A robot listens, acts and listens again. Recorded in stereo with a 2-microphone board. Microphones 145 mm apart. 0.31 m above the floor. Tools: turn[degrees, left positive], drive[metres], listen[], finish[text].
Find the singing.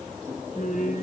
Thought: The singing: about 65° left or 115° left.
Action: turn[65]
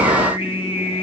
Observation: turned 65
Thought: So it is at 45° left.
Action: turn[45]
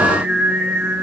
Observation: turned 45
Thought: The singing is now 10° right.
Action: turn[-10]
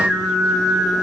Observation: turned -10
Action: finish[Found it: singing, straight ahead.]